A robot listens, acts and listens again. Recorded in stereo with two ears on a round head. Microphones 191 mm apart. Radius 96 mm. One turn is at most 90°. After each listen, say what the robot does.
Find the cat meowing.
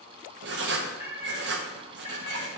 Turn 25° right.
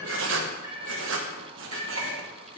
Turn 25° right.
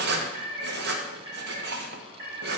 Turn 30° right.
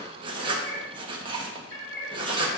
Turn 20° left.
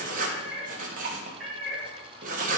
Facing the cat meowing, over 4 m away.